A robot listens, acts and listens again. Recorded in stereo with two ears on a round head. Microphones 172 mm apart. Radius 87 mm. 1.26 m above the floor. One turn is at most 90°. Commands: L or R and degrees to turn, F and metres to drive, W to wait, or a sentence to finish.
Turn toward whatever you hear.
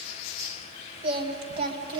R25
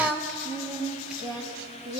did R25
Found it: singing, straight ahead.